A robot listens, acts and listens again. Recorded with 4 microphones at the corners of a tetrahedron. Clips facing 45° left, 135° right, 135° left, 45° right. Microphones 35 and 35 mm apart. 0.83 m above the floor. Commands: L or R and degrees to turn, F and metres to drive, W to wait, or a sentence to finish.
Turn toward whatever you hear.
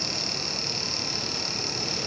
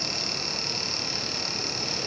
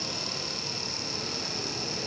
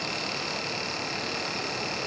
W
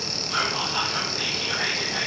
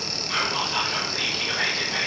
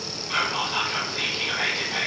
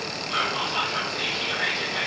L180
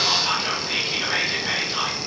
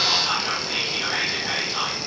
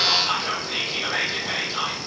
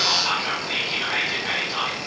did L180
R20
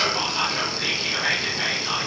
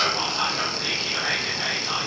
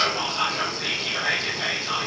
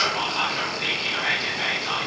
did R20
Found it: whispering, straight ahead.